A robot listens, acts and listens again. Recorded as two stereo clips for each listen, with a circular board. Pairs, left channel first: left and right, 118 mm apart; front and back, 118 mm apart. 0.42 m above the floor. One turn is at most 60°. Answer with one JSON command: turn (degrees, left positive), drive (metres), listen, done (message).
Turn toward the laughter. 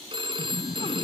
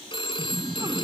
{"turn": 60}
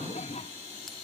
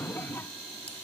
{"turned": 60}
{"turn": 60}
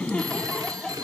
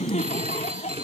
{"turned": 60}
{"done": "Found it: laughter, straight ahead."}